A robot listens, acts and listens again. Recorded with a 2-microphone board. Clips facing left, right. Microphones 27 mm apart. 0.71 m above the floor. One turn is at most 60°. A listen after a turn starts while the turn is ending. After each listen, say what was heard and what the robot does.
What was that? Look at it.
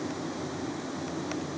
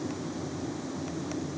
Keep listening.
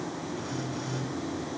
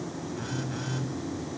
Turn 60° right.
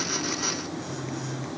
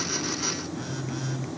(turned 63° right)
So it is at 35° right. Turn 35° right.
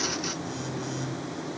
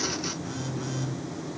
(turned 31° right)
Facing the phone buzzing.